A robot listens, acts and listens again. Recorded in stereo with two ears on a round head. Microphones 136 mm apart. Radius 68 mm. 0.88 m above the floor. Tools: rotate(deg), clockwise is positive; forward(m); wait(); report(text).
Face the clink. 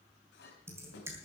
rotate(-90)
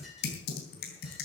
wait()
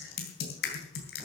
wait()
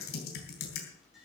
report("Found it: a clink, straight ahead.")